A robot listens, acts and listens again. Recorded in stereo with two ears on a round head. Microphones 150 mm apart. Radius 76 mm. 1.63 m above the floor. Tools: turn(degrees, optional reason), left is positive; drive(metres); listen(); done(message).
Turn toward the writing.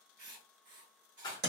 turn(degrees=-55, reason="The writing: about 55° right or 125° right.")
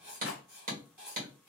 turn(degrees=-10, reason="So it is at 10° right.")
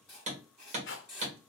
done("Found it: writing, straight ahead.")